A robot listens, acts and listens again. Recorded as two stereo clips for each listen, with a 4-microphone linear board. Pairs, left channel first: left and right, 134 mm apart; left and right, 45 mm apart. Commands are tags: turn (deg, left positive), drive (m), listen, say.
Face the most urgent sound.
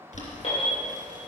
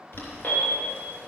<turn deg="50"/>
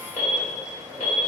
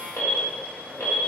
<turn deg="80"/>
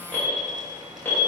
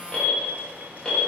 <turn deg="15"/>
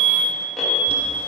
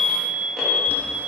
<say>Facing the alarm, 2 to 4 m away.</say>